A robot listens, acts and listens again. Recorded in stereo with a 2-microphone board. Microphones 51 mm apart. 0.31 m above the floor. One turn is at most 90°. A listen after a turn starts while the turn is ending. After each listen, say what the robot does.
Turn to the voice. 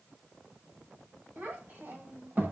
Turn 35° right.
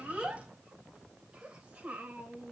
Turn 30° right.
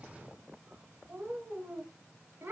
Turn 45° right.
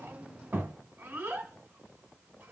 Turn 35° right.
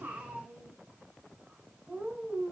Turn 15° right.
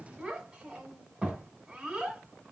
Turn 10° right.
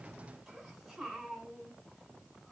Found it: a child speaking, straight ahead.